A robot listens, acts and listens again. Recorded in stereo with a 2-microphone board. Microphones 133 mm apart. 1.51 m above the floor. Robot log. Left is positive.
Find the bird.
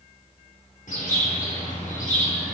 cmd yaw +90
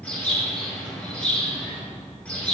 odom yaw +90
note: So it is at 10° left.
cmd yaw +10
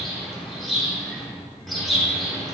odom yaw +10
end: Found it: a bird, straight ahead.